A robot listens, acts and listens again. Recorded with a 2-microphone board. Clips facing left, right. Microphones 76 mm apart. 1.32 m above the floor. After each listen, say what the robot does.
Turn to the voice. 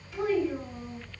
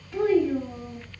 Turn 40° right.
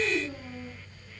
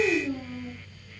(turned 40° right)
Turn 100° right.
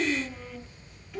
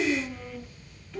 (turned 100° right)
Facing the child speaking, 1 to 2 m away.